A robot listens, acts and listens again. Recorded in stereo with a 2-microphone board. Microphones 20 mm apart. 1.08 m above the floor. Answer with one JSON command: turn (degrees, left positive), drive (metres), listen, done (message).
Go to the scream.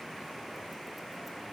{"listen": true}
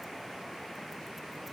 {"listen": true}
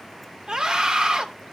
{"turn": -50}
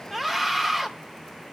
{"drive": 1.0}
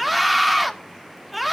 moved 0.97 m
{"drive": 1.0}
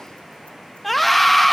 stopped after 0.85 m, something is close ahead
{"turn": 10}
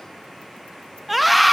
{"done": "I am next to the scream."}